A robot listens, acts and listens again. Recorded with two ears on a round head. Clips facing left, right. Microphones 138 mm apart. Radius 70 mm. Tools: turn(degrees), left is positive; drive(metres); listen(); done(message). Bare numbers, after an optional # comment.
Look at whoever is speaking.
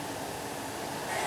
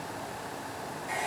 listen()
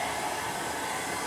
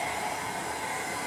listen()
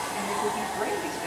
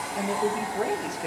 # The woman speaking: about 50° right or 130° right.
turn(-50)
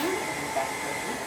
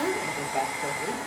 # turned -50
# So it is at 75° right.
turn(-75)
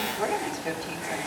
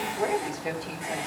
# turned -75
# The woman speaking is now 25° right.
turn(-25)
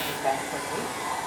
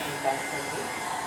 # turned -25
listen()
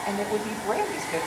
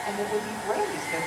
# The woman speaking is now 15° left.
turn(15)
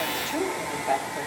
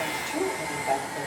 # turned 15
done("Found it: a woman speaking, straight ahead, 2 to 4 m away.")